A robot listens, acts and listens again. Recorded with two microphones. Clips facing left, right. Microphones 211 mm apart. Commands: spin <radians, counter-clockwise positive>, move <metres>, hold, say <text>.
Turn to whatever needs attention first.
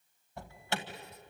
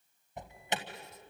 spin -0.35
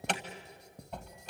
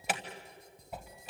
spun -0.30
say Found it: an alarm, straight ahead, 1 to 2 m away.